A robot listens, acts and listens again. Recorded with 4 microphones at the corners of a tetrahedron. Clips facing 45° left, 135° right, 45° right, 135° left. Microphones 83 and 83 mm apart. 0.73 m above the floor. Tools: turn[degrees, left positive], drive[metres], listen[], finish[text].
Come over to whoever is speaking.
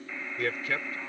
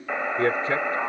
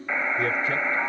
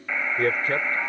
Thought: The man speaking: 170° left.
Action: turn[170]
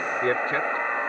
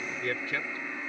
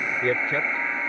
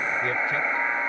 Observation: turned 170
Action: drive[1.0]
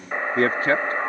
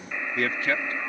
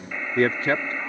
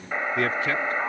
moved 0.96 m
Action: drive[1.0]
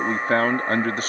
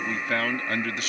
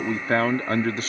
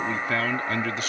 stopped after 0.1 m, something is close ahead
Action: finish[Arrived at the man speaking, straight ahead.]